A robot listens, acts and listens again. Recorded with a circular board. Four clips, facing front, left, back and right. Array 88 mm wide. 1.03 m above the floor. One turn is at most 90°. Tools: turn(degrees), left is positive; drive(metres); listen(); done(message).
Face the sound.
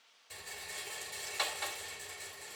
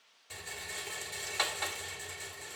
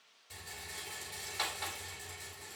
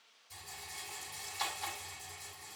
turn(degrees=90)
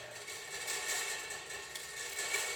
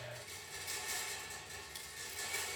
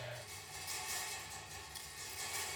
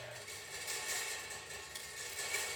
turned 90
done("Found it: a rattle, straight ahead, 2 to 4 m away.")